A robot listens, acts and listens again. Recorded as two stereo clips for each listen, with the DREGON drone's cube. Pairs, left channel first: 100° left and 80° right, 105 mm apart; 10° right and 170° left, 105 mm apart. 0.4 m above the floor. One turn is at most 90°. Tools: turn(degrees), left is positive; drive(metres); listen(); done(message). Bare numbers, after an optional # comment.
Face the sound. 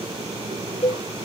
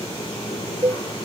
# The cowbell: 125° left.
turn(90)
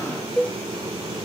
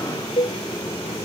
# The cowbell is now 20° left.
turn(20)
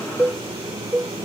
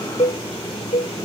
done("Facing the cowbell.")